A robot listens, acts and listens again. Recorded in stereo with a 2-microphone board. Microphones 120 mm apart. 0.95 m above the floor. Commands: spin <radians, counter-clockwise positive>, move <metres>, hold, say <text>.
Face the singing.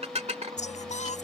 spin 1.57
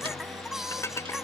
say Found it: singing, straight ahead.